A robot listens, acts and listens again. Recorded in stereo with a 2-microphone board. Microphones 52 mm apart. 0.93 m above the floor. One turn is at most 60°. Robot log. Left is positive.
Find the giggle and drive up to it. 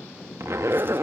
cmd idle
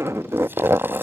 cmd idle
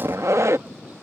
end: I can't make out a giggle, only a zipper.